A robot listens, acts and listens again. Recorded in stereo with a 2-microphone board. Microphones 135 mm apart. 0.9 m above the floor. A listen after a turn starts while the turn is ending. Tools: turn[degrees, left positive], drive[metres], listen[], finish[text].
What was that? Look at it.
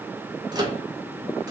Thought: The microwave: about 30° right or 150° right.
Action: turn[-30]
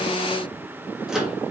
Action: finish[Found it: a microwave, straight ahead.]